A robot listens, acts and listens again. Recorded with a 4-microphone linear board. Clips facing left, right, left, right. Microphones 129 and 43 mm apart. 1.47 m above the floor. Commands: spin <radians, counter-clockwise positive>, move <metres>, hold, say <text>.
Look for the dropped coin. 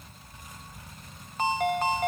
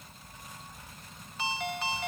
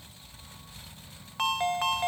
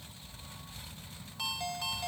hold
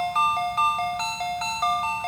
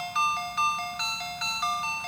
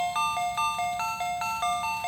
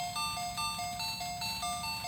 hold
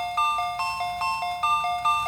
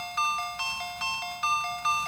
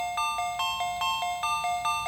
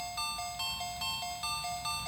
say I can't make out a dropped coin, only a ringtone.